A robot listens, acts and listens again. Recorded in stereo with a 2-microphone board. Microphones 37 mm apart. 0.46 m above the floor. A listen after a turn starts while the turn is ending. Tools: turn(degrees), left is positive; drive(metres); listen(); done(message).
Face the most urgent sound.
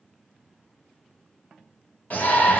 turn(degrees=55)
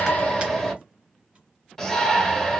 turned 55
turn(degrees=15)
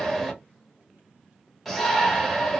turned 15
done("Found it: a shout, straight ahead, 1 to 2 m away.")